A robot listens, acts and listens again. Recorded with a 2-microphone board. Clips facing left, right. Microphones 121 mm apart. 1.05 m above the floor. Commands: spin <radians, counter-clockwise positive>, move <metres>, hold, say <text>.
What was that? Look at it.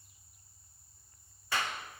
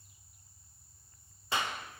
spin -0.44
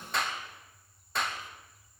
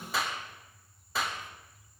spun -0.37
say Found it: a clap, straight ahead, 1 to 2 m away.